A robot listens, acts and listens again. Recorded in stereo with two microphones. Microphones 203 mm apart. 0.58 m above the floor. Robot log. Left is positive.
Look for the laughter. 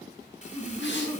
note: The laughter: about 15° left or 165° left.
cmd yaw +15
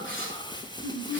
note: The laughter: about 30° left or 150° left.
cmd yaw +30
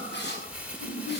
note: So it is at 115° left.
cmd yaw +115
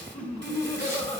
note: The laughter is now 35° left.
cmd yaw +35
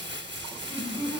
note: The laughter is now 10° left.
cmd yaw +10
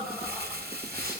end: Found it: laughter, straight ahead, 2 to 4 m away.